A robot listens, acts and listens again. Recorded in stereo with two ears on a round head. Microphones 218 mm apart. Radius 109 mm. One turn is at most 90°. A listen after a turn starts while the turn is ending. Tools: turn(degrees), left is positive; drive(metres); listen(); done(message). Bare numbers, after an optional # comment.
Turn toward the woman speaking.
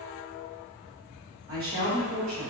# The woman speaking: about 65° right or 115° right.
turn(-65)
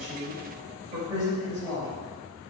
# So it is at 15° right.
turn(-15)
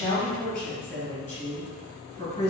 # The woman speaking is now 10° left.
turn(10)
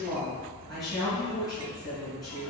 done("Found it: a woman speaking, straight ahead, 2 to 4 m away.")